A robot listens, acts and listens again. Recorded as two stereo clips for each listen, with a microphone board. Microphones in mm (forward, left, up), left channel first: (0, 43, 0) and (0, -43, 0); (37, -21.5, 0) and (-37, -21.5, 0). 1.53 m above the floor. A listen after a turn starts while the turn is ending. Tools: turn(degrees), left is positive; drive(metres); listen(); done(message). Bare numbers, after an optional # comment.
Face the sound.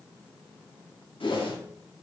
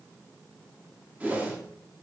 # The whoosh: 110° left.
turn(110)
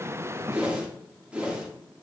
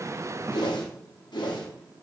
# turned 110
# The whoosh is now 15° right.
turn(-15)
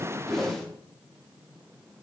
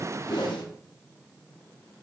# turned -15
done("Facing the whoosh, under 1 m away.")